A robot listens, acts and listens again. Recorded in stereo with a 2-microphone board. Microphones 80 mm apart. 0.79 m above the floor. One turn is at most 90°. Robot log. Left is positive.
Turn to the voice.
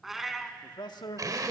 note: The man speaking: about 65° left or 115° left.
cmd yaw +65
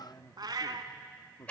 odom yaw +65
note: So it is at 40° left.
cmd yaw +40
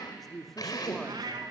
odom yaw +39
end: Found it: a man speaking, straight ahead.